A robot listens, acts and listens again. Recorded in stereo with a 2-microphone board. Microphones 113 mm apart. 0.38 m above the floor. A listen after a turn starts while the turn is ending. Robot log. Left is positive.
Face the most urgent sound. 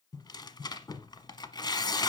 cmd idle
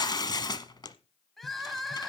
cmd yaw +30
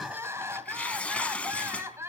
note: So it is at 25° right.
cmd yaw -25
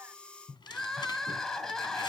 end: Found it: crying, straight ahead, 1 to 2 m away.